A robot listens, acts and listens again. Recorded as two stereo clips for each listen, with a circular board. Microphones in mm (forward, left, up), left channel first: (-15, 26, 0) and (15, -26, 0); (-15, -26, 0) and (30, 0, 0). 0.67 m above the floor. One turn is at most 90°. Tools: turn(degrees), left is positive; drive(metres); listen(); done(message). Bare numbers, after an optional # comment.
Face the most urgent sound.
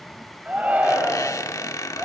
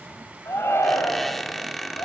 # The shout: 125° right.
turn(-90)
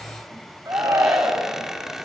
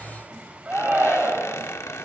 # The shout is now 30° right.
turn(-30)
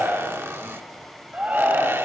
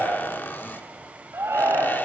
done("Facing the shout.")